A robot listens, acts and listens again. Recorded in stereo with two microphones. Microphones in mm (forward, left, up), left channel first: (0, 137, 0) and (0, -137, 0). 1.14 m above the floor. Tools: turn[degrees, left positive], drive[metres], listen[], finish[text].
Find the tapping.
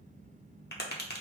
Thought: The tapping: about 35° left or 145° left.
Action: turn[35]
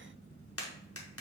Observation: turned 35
Thought: So it is at 100° left.
Action: turn[100]
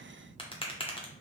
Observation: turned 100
Thought: The tapping is now 25° left.
Action: turn[25]
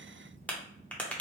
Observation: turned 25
Action: finish[Facing the tapping.]